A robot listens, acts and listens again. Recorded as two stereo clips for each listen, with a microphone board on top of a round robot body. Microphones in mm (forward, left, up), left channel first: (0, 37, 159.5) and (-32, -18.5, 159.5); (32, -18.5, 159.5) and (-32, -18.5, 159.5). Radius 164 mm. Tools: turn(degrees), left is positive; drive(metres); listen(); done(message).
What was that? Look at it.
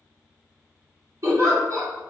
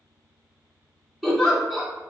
turn(degrees=-85)
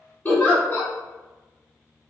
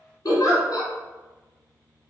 done("Found it: a giggle, straight ahead.")